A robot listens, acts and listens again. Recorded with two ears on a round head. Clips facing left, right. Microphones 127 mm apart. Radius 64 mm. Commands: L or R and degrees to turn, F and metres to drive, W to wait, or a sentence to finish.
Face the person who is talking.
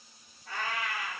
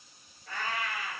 W
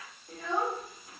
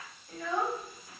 L25
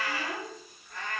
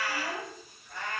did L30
L120
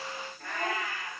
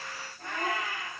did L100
L20
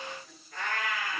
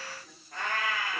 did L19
W
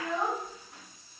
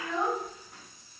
Found it: a child speaking, straight ahead.